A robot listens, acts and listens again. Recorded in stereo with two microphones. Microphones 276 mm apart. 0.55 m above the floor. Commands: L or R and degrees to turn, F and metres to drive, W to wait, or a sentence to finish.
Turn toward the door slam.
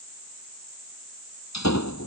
L90
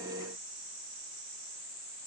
Facing where the door slam came from. I can't hear it now.